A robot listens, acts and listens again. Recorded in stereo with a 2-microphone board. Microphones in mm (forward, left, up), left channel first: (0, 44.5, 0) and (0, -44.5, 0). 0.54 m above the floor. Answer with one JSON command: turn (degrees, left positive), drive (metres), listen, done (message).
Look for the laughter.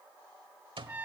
{"listen": true}
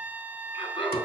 {"turn": 90}
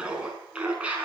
{"turn": -15}
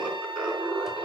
{"turn": -10}
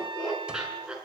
{"turn": -10}
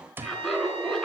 {"done": "Facing the laughter, over 4 m away."}